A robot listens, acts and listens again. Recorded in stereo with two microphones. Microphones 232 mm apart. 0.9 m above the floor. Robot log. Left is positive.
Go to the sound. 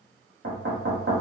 note: The knocking: about 65° right or 115° right.
cmd yaw -65
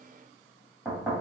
cmd fwd 1.0
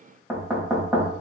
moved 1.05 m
cmd fwd 1.0
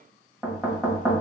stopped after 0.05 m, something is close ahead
end: I am next to the knocking.